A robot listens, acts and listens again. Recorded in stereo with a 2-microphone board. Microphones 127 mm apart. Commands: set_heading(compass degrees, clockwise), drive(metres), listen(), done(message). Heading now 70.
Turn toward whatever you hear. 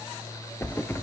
set_heading(50)
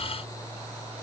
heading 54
listen()
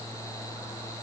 done("I heard a thud, but can't make it out now. It was about 5° left or 145° left.")